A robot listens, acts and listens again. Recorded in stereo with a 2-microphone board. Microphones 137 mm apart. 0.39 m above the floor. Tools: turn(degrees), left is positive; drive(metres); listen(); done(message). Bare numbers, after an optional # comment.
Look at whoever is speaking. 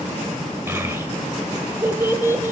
# The child speaking: about 20° right or 160° right.
turn(-20)
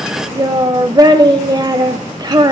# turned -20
# So it is at 140° right.
turn(-140)
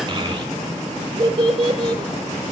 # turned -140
# The child speaking is now 45° right.
turn(-45)
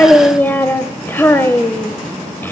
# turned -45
# The child speaking is now 20° left.
turn(20)
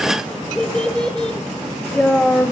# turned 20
# The child speaking is now 10° left.
turn(10)
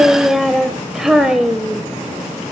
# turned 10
done("Facing the child speaking, under 1 m away.")